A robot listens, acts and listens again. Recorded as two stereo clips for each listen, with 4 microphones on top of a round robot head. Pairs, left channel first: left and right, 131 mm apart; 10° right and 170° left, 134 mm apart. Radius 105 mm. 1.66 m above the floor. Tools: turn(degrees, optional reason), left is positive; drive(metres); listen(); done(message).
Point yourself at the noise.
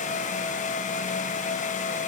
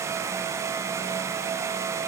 listen()
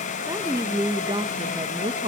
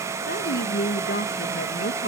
turn(degrees=-30, reason="The woman speaking: 30° right.")
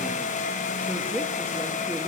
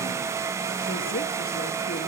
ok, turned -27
listen()
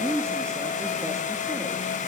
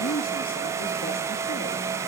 turn(degrees=-15, reason="The woman speaking is now 15° right.")
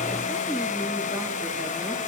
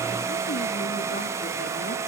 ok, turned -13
listen()
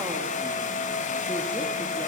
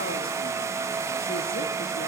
listen()
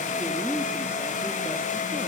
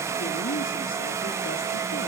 done("Found it: a woman speaking, straight ahead, 2 to 4 m away.")